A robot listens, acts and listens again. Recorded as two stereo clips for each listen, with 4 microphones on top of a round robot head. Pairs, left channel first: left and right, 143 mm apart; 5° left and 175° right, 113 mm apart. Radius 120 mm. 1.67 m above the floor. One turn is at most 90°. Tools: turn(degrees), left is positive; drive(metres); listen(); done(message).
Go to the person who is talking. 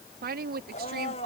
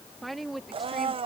turn(degrees=-85)
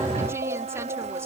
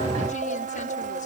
listen()
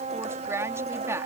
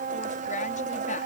turn(degrees=-20)
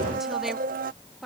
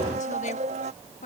drive(metres=1.0)
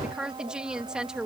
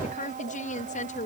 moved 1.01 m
drive(metres=1.0)
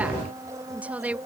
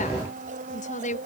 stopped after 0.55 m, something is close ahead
turn(degrees=-10)
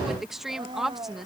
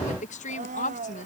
done("Blocked. The woman speaking is further on, straight ahead.")